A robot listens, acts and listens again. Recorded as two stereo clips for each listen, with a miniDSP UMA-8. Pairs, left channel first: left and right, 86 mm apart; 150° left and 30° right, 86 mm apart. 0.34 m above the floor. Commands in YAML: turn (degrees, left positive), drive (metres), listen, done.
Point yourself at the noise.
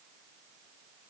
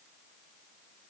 listen: true
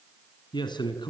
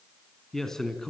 turn: 65
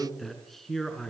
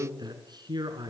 done: "Facing the man speaking, over 4 m away."